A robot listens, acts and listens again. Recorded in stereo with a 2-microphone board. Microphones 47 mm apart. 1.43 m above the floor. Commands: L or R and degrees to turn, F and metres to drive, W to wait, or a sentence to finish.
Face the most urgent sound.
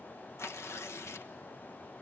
W
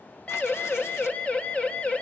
L25
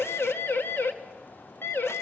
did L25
L125
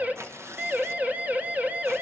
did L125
R35
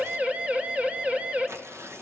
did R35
R30
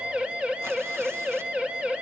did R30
R25
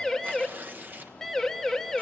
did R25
Found it: a siren, straight ahead, 2 to 4 m away.